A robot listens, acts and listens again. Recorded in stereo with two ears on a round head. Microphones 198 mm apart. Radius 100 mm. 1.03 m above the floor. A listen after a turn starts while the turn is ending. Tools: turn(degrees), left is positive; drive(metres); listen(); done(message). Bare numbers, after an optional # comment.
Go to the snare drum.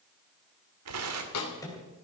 turn(90)
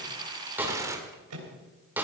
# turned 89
# So it is at 10° right.
turn(-10)
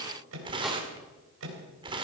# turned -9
listen()
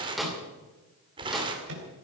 drive(1.0)
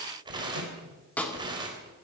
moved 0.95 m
drive(1.0)
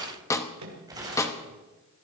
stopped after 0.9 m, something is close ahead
# The snare drum is now 15° left.
turn(15)
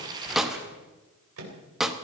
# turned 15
done("I am next to the snare drum.")